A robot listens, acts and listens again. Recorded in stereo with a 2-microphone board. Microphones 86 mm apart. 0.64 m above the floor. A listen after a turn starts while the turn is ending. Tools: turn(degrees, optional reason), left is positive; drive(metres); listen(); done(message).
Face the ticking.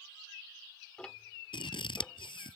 turn(degrees=30)
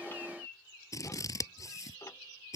turn(degrees=135, reason="So it is at 135° left.")
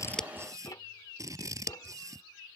listen()
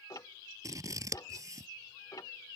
turn(degrees=55, reason="The ticking is now 55° left.")
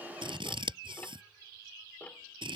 turn(degrees=20, reason="The ticking is now 20° left.")
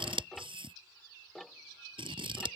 done("Facing the ticking.")